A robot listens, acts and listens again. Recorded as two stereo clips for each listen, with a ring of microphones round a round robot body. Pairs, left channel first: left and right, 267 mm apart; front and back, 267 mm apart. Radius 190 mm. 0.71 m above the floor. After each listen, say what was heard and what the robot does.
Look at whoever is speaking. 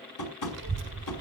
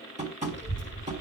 The child speaking: 120° right. Turn 120° right.
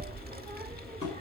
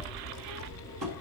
The child speaking is now 30° right. Turn 30° right.
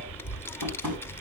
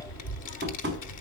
The child speaking is now 10° left. Turn 10° left.
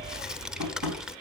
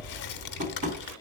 Facing the child speaking.